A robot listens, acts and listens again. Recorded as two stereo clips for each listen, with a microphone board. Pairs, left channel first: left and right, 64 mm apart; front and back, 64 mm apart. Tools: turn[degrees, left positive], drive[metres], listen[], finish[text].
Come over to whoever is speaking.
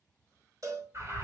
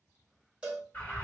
Action: listen[]
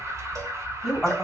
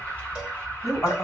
Thought: The woman speaking: 10° right.
Action: turn[-10]
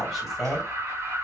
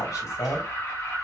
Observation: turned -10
Action: drive[1.0]
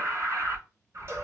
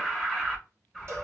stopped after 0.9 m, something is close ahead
Action: listen[]
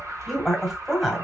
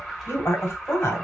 Action: finish[Arrived at the woman speaking, straight ahead.]